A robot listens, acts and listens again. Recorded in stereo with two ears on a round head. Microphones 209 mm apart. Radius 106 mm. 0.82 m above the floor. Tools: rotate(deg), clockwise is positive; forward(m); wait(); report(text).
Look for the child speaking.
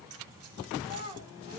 rotate(20)
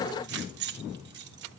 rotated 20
wait()
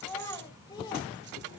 rotate(-20)
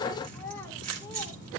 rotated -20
wait()
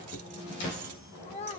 rotate(-30)
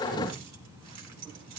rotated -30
wait()
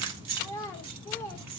rotate(-10)
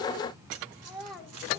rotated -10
report("Facing the child speaking.")